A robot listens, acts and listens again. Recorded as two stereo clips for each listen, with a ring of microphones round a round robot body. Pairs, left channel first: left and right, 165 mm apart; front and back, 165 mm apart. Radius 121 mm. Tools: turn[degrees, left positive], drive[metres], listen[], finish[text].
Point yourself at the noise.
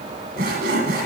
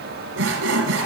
Thought: The sawing: 145° right.
Action: turn[-145]
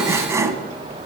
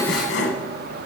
Thought: The sawing is now 15° right.
Action: turn[-15]
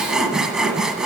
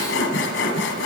Action: finish[Found it: sawing, straight ahead.]